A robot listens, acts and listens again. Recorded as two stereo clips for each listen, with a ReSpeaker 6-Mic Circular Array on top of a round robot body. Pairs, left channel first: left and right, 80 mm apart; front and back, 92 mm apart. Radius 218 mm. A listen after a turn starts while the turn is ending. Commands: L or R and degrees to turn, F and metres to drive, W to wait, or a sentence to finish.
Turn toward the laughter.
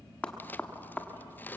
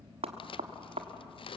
W
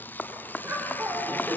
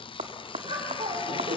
R160
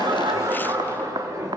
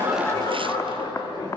R40
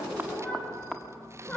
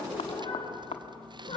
L15
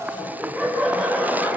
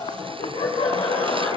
Found it: laughter, straight ahead.